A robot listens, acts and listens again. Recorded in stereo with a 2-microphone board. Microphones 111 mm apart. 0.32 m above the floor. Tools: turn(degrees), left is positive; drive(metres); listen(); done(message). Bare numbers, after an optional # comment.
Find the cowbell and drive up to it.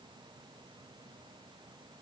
listen()
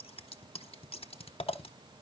listen()
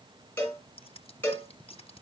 # The cowbell: about 15° left or 165° left.
turn(15)
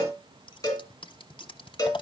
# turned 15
# So it is at 150° left.
turn(150)
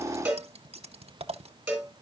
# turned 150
# The cowbell is now 10° right.
turn(-10)
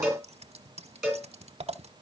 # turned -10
drive(1.0)
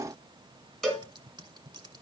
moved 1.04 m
drive(1.0)
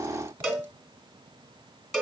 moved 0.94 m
drive(1.0)
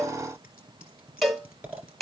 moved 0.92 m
drive(1.0)
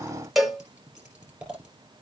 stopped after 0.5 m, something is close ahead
done("Arrived at the cowbell, straight ahead.")